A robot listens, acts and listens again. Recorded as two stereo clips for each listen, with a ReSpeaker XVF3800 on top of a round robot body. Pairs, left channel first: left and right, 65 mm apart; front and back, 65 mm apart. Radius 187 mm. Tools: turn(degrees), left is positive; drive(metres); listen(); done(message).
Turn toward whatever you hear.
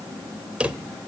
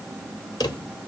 turn(degrees=-15)
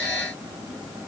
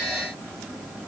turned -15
listen()
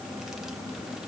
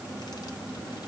listen()
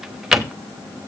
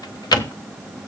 done("Facing the drawer.")